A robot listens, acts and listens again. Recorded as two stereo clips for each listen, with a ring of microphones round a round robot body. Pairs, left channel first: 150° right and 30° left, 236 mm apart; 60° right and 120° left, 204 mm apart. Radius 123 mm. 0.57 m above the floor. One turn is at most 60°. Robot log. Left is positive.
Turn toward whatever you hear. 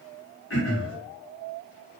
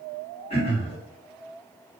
note: The throat clearing: 120° right.
cmd yaw -60
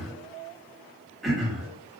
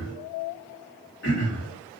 note: The throat clearing is now 60° right.
cmd yaw -60
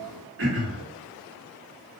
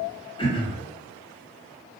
end: Facing the throat clearing, 1 to 2 m away.